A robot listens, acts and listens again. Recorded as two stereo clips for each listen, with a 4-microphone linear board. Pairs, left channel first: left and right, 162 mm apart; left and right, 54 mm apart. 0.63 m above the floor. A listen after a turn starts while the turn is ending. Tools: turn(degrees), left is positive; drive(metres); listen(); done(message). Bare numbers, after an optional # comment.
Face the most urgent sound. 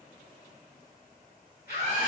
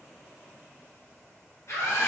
# The scream: about 70° left or 110° left.
turn(70)
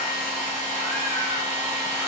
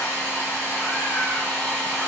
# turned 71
listen()
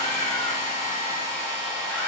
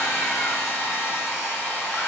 listen()
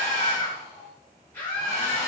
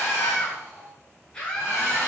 # So it is at 20° left.
turn(20)
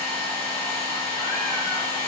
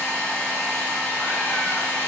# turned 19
listen()
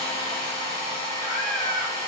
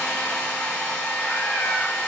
listen()
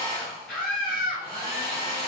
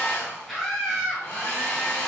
done("Facing the scream, 1 to 2 m away.")